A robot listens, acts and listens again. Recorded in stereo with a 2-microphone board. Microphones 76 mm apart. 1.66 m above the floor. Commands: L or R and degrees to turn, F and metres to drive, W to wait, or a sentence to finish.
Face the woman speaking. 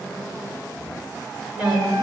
R30
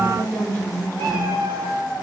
R135
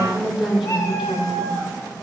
Found it: a woman speaking, straight ahead, over 4 m away.